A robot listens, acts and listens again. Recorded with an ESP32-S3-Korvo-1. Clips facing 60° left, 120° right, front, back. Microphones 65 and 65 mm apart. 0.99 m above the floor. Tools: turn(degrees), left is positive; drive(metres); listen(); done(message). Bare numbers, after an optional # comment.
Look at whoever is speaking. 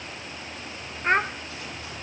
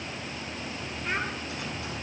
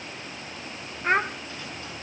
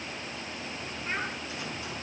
# The child speaking: 25° left.
turn(25)
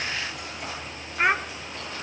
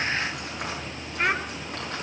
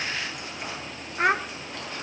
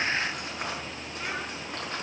# The child speaking is now 15° right.
turn(-15)
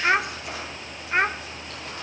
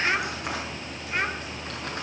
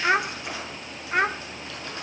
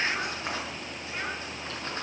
done("Facing the child speaking, under 1 m away.")